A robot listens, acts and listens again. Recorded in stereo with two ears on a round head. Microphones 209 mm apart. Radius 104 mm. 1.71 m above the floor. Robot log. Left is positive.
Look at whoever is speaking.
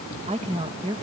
note: The woman speaking: about 25° right or 155° right.
cmd yaw -25
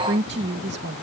note: So it is at 130° right.
cmd yaw -130
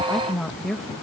end: Found it: a woman speaking, straight ahead.